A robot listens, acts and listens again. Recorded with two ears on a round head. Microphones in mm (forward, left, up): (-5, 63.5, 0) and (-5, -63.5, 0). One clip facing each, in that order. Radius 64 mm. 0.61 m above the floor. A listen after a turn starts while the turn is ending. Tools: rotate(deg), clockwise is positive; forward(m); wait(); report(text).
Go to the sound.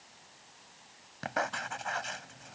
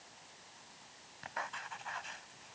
rotate(-70)
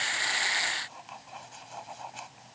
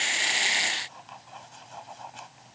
forward(1.0)
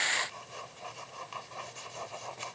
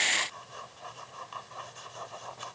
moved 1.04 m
rotate(-10)
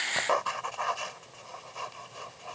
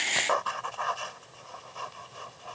forward(1.0)
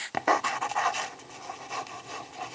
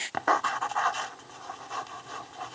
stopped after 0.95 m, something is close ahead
rotate(-15)
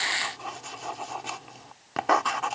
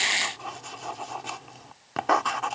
report("I am next to the writing.")